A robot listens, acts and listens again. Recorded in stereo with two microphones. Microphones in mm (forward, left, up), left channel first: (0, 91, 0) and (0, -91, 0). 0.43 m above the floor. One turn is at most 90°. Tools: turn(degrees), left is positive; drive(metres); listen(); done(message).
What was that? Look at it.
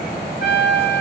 turn(degrees=70)
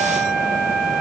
listen()
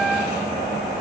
listen()
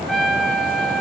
done("Found it: a trumpet, straight ahead.")